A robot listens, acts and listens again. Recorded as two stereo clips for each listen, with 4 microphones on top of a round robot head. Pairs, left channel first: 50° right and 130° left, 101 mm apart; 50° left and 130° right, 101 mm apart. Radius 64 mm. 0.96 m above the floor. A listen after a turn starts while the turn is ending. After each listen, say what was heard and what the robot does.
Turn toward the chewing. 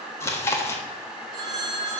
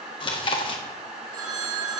The chewing: 15° left. Turn 15° left.
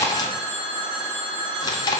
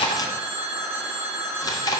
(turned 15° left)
Facing the chewing, 1 to 2 m away.